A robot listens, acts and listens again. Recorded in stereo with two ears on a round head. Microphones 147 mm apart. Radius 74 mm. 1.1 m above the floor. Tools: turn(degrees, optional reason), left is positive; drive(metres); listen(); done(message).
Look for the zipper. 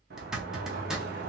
turn(degrees=-30)
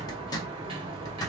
turn(degrees=25, reason="So it is at 25° left.")
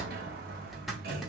done("Facing the zipper.")